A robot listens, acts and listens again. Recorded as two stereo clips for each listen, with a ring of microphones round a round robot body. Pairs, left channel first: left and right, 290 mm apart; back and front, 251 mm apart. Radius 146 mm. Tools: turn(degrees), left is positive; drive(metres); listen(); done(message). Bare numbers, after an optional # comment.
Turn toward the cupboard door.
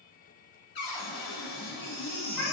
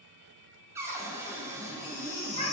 # The cupboard door: 80° left.
turn(80)
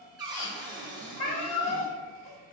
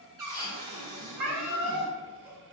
# The cupboard door is now 15° right.
turn(-15)
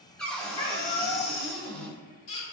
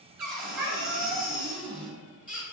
done("Found it: a cupboard door, straight ahead, 1 to 2 m away.")